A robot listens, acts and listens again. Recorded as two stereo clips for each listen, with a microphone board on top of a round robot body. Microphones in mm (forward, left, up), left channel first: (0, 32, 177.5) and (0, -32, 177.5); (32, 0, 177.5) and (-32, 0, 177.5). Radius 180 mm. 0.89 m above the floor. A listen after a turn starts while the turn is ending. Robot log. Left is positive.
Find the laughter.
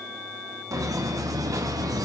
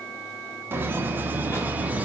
note: The laughter: 110° right.
cmd yaw -110
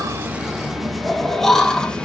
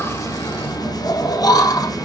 note: The laughter is now 15° left.
cmd yaw +15
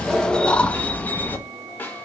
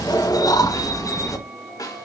note: The laughter is now 30° left.
cmd yaw +30
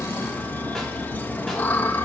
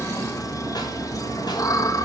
note: The laughter is now 25° left.
cmd yaw +25
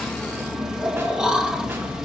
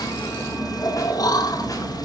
note: The laughter is now 10° right.
cmd yaw -10
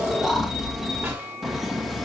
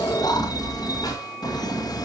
end: Facing the laughter, 2 to 4 m away.